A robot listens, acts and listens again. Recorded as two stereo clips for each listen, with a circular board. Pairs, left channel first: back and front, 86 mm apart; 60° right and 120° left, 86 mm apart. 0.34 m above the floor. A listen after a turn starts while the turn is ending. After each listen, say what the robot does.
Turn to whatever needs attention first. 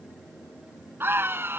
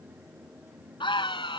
Turn 65° right.
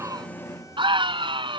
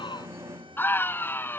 Facing the scream.